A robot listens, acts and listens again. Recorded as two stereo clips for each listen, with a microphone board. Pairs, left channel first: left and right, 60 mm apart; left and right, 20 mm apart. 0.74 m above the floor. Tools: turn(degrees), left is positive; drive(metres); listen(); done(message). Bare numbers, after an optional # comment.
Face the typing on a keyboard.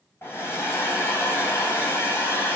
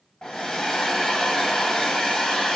listen()
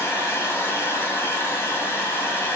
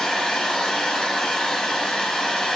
listen()
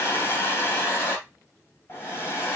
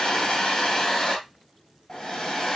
done("I can't make out typing on a keyboard, only a hair dryer.")